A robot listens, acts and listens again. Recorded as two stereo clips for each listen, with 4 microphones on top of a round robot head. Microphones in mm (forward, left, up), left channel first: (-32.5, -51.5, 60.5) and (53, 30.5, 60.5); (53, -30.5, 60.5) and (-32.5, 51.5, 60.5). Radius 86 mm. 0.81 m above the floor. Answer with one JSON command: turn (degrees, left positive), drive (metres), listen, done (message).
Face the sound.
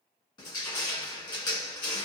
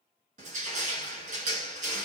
{"turn": 165}
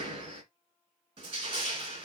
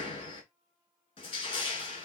{"done": "Found it: crushing, straight ahead."}